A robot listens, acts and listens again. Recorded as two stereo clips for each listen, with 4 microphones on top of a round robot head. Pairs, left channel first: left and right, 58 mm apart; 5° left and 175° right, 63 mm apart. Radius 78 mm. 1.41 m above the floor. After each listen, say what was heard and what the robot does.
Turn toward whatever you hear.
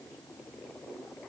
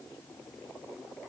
Keep listening.
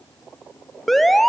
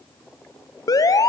Found it: an alarm, straight ahead, 1 to 2 m away.